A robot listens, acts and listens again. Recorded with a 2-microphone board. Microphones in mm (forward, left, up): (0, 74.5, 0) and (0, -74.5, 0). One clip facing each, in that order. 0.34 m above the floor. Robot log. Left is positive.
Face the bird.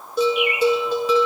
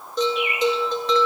note: The bird: about 65° left or 115° left.
cmd yaw +65
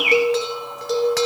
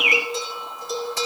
note: So it is at 45° left.
cmd yaw +45
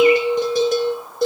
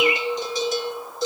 cmd idle
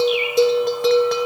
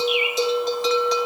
cmd idle
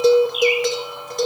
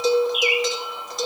end: Found it: a bird, straight ahead, 1 to 2 m away.